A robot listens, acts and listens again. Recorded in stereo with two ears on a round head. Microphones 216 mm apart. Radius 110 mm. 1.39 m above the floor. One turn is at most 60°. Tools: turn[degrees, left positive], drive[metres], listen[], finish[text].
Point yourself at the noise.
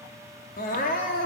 Thought: The crying: about 35° left or 145° left.
Action: turn[35]
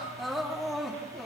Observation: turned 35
Action: finish[Facing the crying.]